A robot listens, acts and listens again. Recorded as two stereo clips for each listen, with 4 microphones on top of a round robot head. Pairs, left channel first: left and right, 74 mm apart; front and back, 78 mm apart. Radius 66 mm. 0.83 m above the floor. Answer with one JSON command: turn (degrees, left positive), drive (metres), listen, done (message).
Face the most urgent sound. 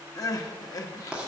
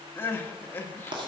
{"turn": 60}
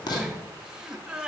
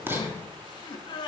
{"turn": -10}
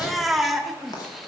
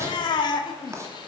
{"done": "Found it: crying, straight ahead."}